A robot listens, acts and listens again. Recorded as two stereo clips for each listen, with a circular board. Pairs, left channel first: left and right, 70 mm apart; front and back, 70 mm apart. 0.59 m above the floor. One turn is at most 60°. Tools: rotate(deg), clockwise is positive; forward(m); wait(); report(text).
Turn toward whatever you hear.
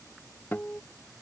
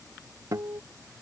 rotate(-60)
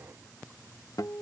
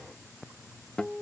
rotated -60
rotate(-60)
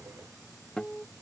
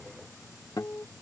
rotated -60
rotate(-15)
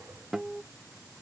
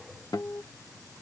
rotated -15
report("Found it: a guitar, straight ahead.")